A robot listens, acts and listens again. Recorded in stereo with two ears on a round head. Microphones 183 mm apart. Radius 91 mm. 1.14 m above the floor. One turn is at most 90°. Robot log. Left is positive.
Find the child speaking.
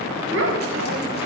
note: The child speaking: about 60° right or 120° right.
cmd yaw -60
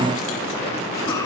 note: So it is at 20° left.
cmd yaw +20
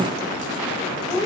note: The child speaking is now 10° left.
cmd yaw +10
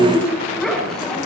end: Found it: a child speaking, straight ahead, over 4 m away.